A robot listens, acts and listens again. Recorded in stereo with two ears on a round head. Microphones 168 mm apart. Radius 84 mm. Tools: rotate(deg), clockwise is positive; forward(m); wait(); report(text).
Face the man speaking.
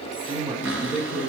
rotate(30)
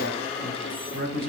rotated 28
rotate(120)
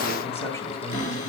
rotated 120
wait()
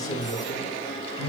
rotate(-30)
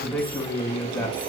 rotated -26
rotate(-15)
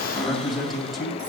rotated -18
report("Found it: a man speaking, straight ahead, 2 to 4 m away.")